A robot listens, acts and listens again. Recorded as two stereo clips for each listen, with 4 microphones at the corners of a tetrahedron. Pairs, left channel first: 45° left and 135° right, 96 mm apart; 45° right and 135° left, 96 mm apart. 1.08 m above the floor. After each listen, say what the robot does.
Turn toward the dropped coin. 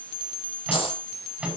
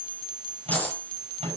Turn 30° left.
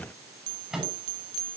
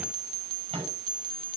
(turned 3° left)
Turn 25° left.
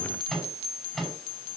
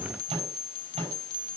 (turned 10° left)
Turn 15° left.
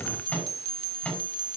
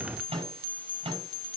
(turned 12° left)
I heard a dropped coin from this way, but can't make it out now.